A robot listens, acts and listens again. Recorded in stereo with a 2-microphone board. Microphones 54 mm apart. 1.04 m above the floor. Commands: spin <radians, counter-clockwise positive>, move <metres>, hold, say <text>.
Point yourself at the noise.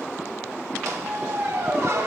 spin -1.13
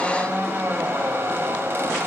spin -0.79
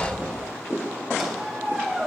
say Found it: a squeak, straight ahead, 2 to 4 m away.